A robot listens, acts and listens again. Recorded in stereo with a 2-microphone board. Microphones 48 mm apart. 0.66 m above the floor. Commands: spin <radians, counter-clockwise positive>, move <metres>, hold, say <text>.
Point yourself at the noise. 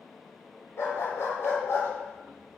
spin 1.57
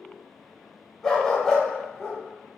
say Facing the dog barking.